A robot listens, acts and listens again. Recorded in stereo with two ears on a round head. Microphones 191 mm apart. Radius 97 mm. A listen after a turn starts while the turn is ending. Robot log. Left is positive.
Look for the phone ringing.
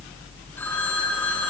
cmd yaw +30
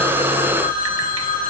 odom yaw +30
note: So it is at 140° left.
cmd yaw +140
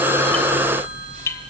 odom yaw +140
cmd idle
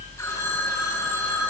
note: The phone ringing is now 10° left.
cmd yaw +10
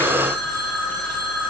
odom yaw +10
end: Found it: a phone ringing, straight ahead.